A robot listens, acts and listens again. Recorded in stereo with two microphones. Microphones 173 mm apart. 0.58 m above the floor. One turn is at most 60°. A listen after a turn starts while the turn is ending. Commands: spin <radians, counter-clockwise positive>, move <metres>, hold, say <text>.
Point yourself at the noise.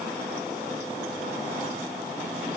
hold
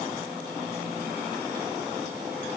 hold
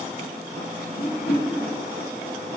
spin 1.05
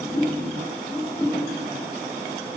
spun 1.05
spin 0.35
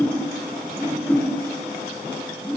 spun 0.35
spin 0.17
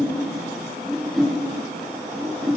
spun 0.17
say Found it: a whoosh, straight ahead.